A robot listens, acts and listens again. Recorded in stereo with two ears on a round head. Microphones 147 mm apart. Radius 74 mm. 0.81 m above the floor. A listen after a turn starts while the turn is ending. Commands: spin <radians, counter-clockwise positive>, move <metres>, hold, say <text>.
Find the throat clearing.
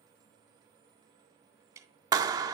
hold
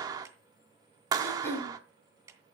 spin 0.52
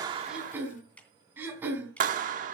spin -0.26
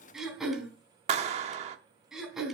say Found it: throat clearing, straight ahead, over 4 m away.